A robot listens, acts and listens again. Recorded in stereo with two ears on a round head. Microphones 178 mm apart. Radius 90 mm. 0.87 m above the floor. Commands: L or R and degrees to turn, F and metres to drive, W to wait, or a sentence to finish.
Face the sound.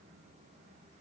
W
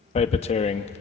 L35
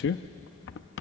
L110
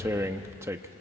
R15
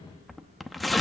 Found it: tearing paper, straight ahead.